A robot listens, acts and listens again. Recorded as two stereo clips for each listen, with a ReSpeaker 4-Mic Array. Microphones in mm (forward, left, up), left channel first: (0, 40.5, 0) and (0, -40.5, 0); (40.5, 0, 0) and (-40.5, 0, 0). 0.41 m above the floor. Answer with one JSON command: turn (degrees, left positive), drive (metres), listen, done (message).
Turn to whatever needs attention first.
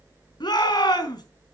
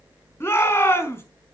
{"turn": 60}
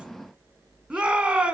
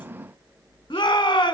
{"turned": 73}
{"turn": -15}
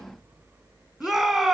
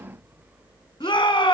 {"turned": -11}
{"done": "Facing the shout."}